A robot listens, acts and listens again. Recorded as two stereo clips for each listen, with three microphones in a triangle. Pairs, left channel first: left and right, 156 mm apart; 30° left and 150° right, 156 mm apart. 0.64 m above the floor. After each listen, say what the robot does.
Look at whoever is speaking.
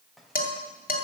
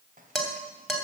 Keep listening.
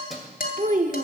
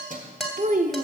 Turn 125° right.
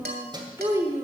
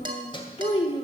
Turn 25° right.
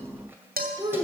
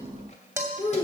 Turn 30° right.
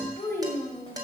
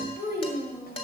Turn 10° left.
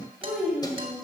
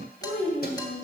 Facing the child speaking.